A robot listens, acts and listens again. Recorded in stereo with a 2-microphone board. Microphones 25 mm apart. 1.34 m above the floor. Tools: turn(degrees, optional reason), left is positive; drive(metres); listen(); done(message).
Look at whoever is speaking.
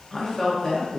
turn(degrees=30)
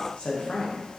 turn(degrees=135, reason="So it is at 135° left.")
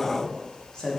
turn(degrees=30, reason="The woman speaking is now 30° left.")
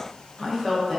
turn(degrees=10, reason="The woman speaking is now 10° left.")
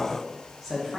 done("Facing the woman speaking.")